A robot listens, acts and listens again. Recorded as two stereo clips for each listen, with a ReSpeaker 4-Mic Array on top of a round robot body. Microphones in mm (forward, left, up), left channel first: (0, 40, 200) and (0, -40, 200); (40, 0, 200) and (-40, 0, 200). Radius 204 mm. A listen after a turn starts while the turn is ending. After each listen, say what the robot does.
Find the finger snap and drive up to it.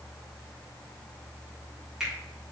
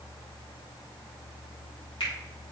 Turn 10° right.
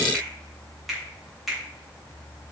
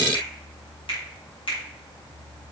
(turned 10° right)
Drive 1.0 m forward.
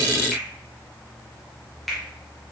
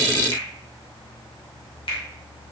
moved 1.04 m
Drive 1.0 m forward.
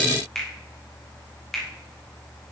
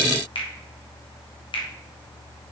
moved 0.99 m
Drive 1.0 m forward.
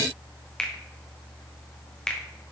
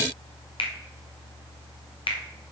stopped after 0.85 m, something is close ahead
Turn 10° left.
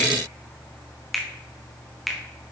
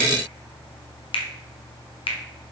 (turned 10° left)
Arrived at the finger snap, straight ahead.